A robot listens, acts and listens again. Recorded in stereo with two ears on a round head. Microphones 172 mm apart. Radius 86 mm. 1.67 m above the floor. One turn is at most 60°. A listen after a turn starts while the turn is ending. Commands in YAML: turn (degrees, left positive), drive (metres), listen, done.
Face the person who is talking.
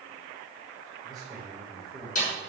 turn: 30
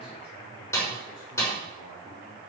listen: true
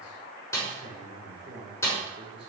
turn: -30
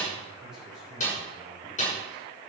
done: "Facing the man speaking."